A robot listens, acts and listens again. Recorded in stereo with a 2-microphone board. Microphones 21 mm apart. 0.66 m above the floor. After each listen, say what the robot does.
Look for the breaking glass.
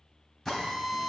Keep listening.
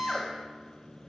Keep listening.
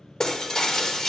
Turn 30° left.
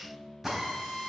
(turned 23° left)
Keep listening.
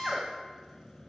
I heard breaking glass, but can't make it out now. It was about 5° left or 130° left.